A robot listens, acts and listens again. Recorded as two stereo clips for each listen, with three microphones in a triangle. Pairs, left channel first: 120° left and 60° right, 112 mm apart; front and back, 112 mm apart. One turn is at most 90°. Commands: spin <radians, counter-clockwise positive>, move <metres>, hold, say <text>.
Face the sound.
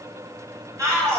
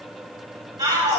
spin -1.57
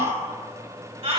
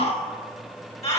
spin -0.44
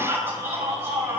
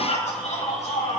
spin 0.17
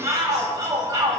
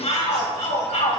say Found it: a shout, straight ahead.